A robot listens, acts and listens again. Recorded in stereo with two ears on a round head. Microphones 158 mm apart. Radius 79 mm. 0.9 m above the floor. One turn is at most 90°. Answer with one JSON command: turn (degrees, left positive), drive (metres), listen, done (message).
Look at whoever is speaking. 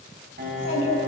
{"turn": 70}
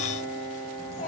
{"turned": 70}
{"turn": 40}
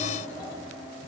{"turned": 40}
{"turn": 10}
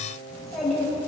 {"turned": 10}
{"done": "Found it: a child speaking, straight ahead, over 4 m away."}